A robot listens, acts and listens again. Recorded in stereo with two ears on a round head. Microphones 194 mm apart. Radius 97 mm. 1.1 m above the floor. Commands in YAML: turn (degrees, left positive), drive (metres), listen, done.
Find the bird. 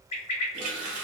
turn: 30
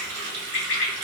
turn: 120
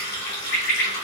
turn: 15
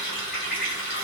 done: "Facing the bird."